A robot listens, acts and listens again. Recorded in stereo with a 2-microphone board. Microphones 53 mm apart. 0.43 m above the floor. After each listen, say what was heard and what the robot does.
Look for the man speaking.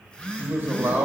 The man speaking: about 45° right or 135° right. Turn 45° right.
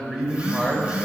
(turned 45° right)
So it is at 15° right. Turn 15° right.
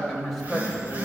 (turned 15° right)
Found it: a man speaking, straight ahead.